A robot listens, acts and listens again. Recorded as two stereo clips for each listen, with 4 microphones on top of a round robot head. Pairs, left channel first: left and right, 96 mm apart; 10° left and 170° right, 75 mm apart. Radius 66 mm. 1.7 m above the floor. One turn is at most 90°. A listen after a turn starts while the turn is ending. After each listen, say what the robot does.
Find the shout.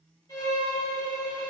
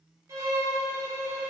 Keep listening.
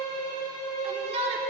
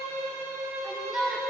Turn 85° right.
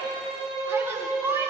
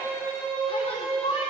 Turn 25° right.
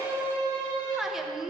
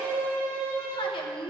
Found it: a shout, straight ahead.